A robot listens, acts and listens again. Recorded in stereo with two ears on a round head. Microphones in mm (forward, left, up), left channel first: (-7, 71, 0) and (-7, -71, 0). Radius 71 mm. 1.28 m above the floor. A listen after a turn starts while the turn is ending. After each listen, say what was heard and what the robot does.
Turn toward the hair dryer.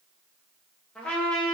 Keep listening.
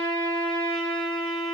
Keep listening.
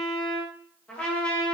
I can't make out a hair dryer, only a trumpet.